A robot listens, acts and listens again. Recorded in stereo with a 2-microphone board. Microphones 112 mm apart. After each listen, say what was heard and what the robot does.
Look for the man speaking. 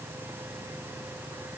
Keep listening.
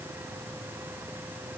Keep listening.
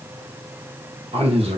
The man speaking: about 65° right or 115° right. Turn 65° right.
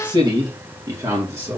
So it is at 25° right. Turn 25° right.
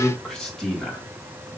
Found it: a man speaking, straight ahead.